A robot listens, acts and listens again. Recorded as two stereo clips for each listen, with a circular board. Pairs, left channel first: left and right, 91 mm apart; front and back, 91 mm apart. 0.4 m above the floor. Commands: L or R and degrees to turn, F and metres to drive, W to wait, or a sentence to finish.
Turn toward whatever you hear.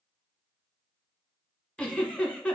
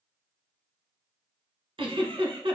L165
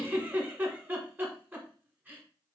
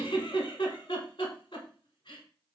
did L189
R25
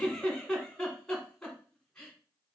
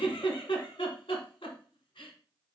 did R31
Facing the giggle.